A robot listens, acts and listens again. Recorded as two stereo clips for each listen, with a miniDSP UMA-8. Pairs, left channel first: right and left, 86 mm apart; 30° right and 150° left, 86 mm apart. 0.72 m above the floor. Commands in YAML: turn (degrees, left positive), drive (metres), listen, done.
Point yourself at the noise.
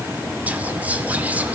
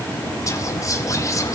turn: 20
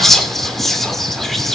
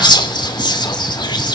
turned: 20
done: "Found it: whispering, straight ahead."